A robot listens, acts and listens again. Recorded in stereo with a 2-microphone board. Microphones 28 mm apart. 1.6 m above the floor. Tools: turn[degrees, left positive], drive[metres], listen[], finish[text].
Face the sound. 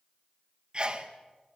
Thought: The sneeze: about 35° right or 145° right.
Action: turn[-35]
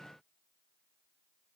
Action: listen[]
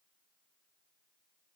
Action: finish[I heard a sneeze, but can't make it out now. It was about straight ahead or 110° right.]